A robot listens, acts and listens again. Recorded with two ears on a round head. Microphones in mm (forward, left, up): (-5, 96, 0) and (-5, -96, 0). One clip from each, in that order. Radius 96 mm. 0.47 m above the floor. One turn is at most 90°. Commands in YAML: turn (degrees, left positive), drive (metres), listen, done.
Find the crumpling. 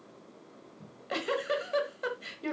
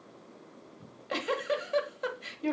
listen: true
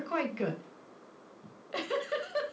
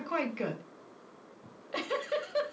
listen: true
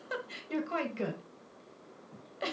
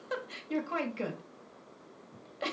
done: "I can't make out crumpling, only a giggle."